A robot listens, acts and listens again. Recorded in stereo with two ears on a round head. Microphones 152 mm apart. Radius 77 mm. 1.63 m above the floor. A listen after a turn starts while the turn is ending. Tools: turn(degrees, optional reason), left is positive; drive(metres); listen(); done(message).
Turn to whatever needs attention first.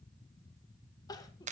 turn(degrees=25, reason="The crying: about 25° left or 155° left.")
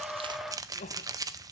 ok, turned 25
turn(degrees=135, reason="So it is at 135° left.")
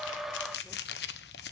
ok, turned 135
listen()
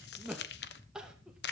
done("Found it: crying, straight ahead.")